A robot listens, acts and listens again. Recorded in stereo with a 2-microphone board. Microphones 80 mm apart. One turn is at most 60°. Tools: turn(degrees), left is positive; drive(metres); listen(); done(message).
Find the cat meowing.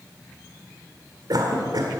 listen()
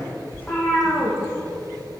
turn(degrees=20)
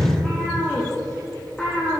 turn(degrees=30)
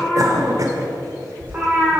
turn(degrees=-20)
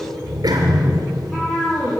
done("Facing the cat meowing, over 4 m away.")